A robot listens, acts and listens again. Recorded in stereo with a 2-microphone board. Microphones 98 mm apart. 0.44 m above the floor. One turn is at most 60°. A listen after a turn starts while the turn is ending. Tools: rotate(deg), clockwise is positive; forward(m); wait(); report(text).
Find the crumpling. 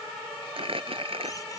rotate(60)
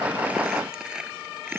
report("Found it: crumpling, straight ahead.")